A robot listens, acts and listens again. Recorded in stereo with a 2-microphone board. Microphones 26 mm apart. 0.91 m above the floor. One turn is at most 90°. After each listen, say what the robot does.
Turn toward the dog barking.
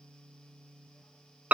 Keep listening.
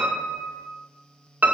Keep listening.
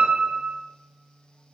I can't make out a dog barking, only a piano.